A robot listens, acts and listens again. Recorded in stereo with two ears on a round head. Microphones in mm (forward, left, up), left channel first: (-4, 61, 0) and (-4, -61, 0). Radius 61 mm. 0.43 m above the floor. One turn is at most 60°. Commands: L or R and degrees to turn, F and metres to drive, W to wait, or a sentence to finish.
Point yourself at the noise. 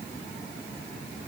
W
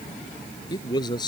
L30
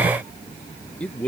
L10
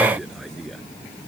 Facing the man speaking.